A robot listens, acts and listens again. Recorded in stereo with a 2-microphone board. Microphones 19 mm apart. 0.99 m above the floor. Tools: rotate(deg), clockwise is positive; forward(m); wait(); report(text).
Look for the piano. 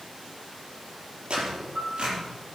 rotate(90)
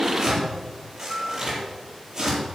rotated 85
report("Found it: a piano, straight ahead.")